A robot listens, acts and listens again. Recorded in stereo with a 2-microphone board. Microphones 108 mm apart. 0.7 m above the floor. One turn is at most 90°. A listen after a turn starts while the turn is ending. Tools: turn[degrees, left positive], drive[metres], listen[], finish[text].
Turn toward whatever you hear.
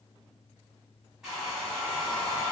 Action: turn[-30]
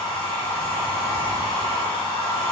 Thought: So it is at 20° left.
Action: turn[20]
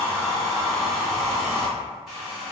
Action: finish[Found it: a hair dryer, straight ahead.]